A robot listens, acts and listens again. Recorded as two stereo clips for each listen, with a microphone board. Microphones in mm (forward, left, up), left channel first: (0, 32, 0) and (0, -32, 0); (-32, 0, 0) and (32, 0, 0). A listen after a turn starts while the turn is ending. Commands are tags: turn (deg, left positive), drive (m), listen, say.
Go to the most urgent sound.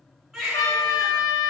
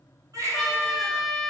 <drive m="1.0"/>
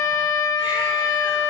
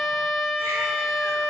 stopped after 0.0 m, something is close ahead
<listen/>
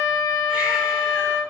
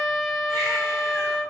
<listen/>
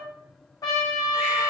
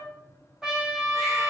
<say>I heard a baby crying from this way, but can't make it out now. I did not reach it.</say>